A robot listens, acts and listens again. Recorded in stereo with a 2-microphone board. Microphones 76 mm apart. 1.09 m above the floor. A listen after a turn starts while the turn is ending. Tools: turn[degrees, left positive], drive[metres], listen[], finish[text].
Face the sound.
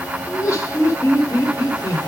Thought: The laughter: about 40° left or 140° left.
Action: turn[40]
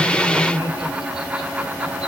Thought: So it is at 95° left.
Action: turn[95]
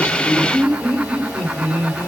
Action: finish[Facing the laughter.]